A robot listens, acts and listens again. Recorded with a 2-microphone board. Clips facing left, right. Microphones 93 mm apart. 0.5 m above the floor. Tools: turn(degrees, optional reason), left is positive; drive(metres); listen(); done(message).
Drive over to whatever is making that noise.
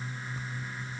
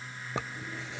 turn(degrees=-90)
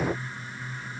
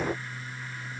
listen()
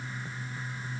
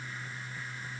listen()
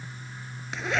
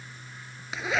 drive(metres=1.0)
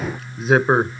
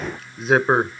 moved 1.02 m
drive(metres=1.0)
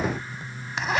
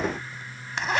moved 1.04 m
drive(metres=1.0)
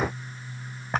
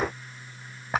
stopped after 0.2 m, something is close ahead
done("Arrived at the zipper, straight ahead.")